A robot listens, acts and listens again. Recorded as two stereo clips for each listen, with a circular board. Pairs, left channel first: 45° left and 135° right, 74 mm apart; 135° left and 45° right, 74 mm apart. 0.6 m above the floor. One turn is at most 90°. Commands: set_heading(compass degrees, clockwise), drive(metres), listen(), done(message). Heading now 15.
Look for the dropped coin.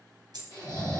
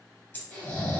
set_heading(105)
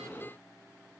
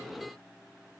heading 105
set_heading(180)
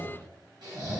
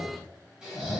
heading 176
done("Facing where the dropped coin came from. I can't hear it now.")